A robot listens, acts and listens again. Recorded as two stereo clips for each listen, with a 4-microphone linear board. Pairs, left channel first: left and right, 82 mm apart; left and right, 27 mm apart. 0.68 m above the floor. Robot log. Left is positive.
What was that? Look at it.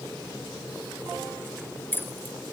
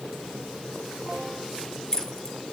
note: The keys jangling: about 25° left or 155° left.
cmd yaw +25
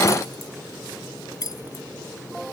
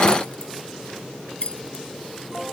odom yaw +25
note: So it is at 130° left.
cmd yaw +130
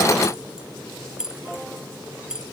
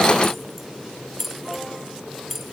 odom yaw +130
note: The keys jangling is now 10° right.
cmd yaw -10
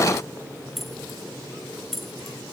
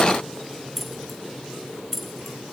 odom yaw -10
end: Found it: keys jangling, straight ahead.